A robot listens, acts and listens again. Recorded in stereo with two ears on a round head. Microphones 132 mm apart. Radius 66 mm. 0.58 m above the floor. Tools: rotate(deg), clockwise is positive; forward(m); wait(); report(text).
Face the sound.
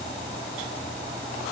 wait()
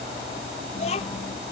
rotate(-45)
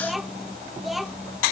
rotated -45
report("Facing the child speaking.")